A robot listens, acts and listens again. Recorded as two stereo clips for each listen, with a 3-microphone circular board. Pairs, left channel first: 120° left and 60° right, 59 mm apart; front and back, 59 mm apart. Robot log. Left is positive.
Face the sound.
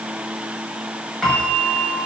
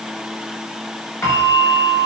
note: The bell: 40° left.
cmd yaw +40
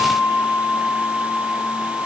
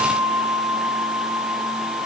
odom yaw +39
end: Facing the bell, over 4 m away.